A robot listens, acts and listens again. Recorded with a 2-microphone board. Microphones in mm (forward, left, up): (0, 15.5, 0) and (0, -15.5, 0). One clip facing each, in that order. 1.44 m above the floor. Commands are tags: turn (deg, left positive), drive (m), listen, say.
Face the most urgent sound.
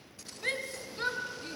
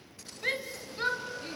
<turn deg="-30"/>
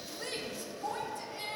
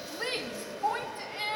<turn deg="-140"/>
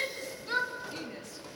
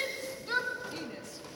<say>Facing the shout.</say>